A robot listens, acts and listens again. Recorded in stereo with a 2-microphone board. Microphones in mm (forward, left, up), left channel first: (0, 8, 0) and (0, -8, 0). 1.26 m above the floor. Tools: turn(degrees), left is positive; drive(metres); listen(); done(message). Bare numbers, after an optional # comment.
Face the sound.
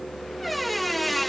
turn(30)
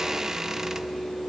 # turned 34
# So it is at 35° right.
turn(-35)
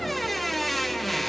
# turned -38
done("Facing the squeak, 1 to 2 m away.")